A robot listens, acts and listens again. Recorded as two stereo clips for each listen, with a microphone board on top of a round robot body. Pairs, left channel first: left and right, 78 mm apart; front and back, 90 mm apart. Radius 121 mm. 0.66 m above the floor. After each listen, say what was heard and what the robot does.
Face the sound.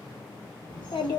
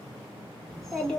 The child speaking: 80° left. Turn 80° left.
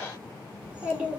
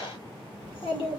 The child speaking is now 20° right. Turn 20° right.
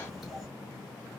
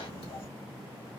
Found it: a child speaking, straight ahead, 2 to 4 m away.